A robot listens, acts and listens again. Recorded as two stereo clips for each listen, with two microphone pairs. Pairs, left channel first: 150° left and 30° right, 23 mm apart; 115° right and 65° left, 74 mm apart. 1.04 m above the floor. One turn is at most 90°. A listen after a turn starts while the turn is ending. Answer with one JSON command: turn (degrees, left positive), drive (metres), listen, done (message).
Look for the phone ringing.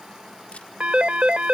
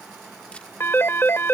{"turn": -60}
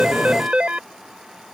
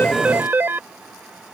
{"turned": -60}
{"done": "Found it: a phone ringing, straight ahead."}